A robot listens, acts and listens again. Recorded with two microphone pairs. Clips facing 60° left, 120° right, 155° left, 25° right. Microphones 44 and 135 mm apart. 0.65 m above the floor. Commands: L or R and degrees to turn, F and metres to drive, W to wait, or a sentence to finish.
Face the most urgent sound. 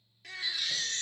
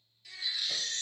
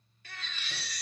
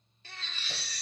L35
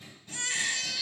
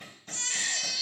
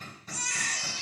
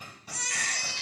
R10
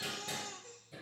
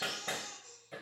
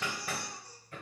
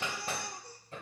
Found it: a baby crying, straight ahead, under 1 m away.